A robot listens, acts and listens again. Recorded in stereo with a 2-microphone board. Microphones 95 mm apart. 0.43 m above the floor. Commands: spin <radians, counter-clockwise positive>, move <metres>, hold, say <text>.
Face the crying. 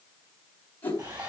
hold
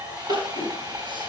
spin -0.96
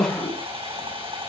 say Facing the crying.